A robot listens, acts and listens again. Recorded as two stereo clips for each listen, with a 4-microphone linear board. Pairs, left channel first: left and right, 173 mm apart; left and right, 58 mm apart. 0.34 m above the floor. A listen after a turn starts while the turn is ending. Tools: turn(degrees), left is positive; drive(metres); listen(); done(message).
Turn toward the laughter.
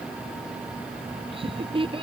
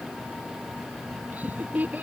turn(degrees=-30)
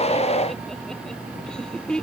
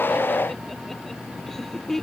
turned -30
done("Found it: laughter, straight ahead.")